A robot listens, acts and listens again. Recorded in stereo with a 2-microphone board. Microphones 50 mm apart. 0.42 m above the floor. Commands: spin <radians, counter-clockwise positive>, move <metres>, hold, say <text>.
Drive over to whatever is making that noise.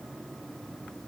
hold
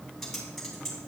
spin 0.52
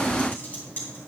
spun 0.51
spin 2.53
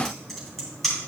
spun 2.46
move 1.0
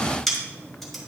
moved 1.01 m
move 1.0
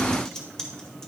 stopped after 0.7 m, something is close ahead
spin 0.26
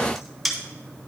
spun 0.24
say Arrived at the typing on a keyboard, straight ahead.